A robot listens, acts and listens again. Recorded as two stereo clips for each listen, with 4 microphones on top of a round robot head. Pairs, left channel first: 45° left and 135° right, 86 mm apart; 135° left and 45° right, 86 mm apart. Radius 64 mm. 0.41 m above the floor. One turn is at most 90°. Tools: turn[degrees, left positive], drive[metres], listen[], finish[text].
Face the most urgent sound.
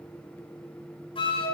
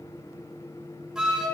Action: listen[]
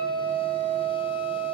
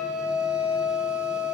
Action: listen[]
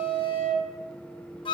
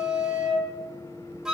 Action: finish[I can't make out anything urgent, only a flute.]